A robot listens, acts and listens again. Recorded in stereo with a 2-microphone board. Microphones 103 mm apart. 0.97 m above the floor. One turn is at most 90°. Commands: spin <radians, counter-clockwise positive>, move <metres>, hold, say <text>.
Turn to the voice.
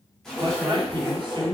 spin -0.79
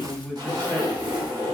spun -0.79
say Found it: a man speaking, straight ahead, under 1 m away.